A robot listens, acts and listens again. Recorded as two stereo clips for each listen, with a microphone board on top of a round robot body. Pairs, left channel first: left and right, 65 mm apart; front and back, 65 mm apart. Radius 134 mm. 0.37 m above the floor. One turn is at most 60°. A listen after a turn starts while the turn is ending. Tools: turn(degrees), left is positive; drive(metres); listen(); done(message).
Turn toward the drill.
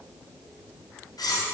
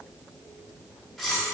listen()
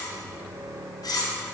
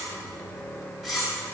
turn(degrees=-60)
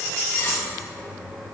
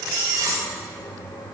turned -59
done("Facing the drill.")